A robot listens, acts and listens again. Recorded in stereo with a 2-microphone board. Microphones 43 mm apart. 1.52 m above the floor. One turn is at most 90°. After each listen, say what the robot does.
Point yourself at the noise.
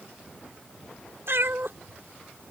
Turn 70° right.
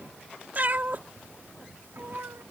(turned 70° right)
Turn 65° right.
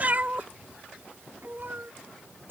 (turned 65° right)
Turn 55° right.
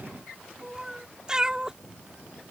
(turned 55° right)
Turn 20° right.
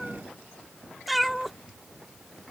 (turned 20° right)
Facing the cat meowing.